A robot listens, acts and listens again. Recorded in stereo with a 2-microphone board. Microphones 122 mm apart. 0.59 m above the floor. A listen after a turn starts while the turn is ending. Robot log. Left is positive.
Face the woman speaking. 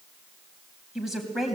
cmd yaw +30
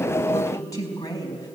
note: So it is at 145° left.
cmd yaw +145
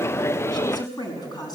note: The woman speaking is now 35° left.
cmd yaw +35
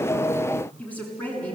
note: The woman speaking is now 10° left.
cmd yaw +10
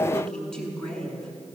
end: Facing the woman speaking.